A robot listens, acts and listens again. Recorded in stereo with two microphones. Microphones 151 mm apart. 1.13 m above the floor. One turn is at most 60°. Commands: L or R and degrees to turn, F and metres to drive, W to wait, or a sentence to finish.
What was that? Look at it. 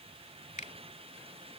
L55
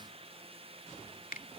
L60
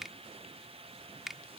Found it: a finger snap, straight ahead.